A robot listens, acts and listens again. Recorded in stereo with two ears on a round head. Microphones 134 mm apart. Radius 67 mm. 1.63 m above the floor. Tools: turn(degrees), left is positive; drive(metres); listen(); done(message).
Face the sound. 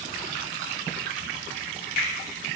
listen()
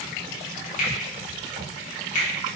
turn(degrees=55)
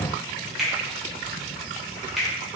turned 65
done("Found it: a finger snap, straight ahead, 1 to 2 m away.")